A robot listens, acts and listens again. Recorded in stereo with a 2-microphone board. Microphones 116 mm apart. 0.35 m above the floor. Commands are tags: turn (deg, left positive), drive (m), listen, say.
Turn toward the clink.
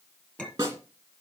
<turn deg="30"/>
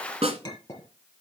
<turn deg="145"/>
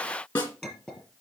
<say>Facing the clink.</say>